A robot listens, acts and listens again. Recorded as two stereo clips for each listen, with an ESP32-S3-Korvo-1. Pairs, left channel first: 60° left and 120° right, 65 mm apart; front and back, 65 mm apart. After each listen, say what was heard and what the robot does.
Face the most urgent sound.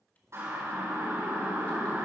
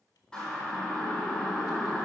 The siren: 75° right. Turn 75° right.
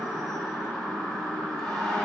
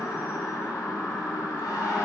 The siren is now 15° right. Turn 15° right.
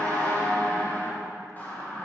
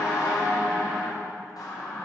Found it: a siren, straight ahead, over 4 m away.